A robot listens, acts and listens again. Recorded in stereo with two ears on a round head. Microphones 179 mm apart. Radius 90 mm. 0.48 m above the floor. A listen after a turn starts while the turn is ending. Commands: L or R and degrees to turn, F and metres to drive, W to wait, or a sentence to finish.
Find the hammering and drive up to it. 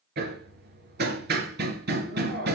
R55
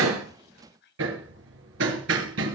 R65
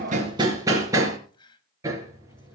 R15
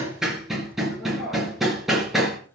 F1.0
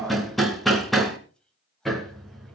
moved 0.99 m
F1.0
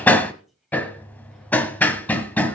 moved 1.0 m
L10
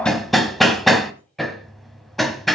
F1.0
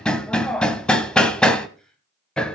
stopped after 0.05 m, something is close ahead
I am next to the hammering.